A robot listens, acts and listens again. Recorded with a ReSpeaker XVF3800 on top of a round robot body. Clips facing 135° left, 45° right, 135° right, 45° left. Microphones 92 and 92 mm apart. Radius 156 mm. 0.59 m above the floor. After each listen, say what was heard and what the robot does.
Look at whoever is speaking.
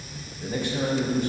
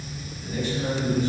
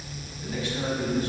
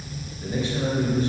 The man speaking: 105° left. Turn 105° left.
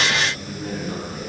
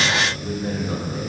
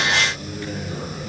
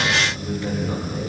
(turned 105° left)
Facing the man speaking.